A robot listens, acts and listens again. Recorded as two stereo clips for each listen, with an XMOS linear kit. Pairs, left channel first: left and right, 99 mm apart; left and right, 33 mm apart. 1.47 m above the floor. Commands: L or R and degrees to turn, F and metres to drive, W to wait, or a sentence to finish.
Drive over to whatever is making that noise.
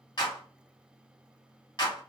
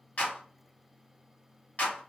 L45
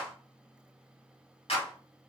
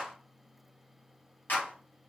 L90
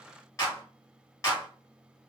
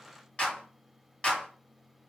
L30
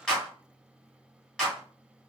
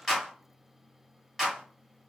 F1.0
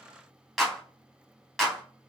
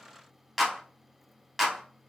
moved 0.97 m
F1.0
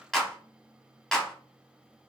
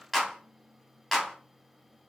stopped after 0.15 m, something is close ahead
Arrived at the clap, straight ahead.